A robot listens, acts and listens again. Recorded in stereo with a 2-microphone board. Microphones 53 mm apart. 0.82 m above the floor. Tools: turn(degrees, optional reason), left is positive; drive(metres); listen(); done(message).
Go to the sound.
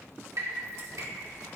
turn(degrees=-70, reason="The dripping: about 70° right or 110° right.")
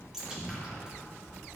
turn(degrees=-10, reason="So it is at 10° right.")
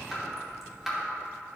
drive(metres=1.0)
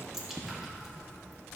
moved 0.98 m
drive(metres=1.0)
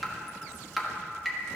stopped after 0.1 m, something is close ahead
done("Arrived at the dripping, straight ahead.")